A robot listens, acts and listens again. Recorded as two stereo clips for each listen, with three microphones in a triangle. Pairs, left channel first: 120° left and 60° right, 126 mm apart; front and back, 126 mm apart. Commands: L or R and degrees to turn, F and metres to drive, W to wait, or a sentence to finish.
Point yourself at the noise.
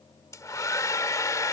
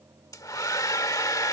L60
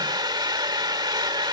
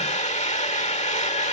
R10
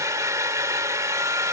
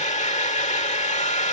Found it: a hair dryer, straight ahead.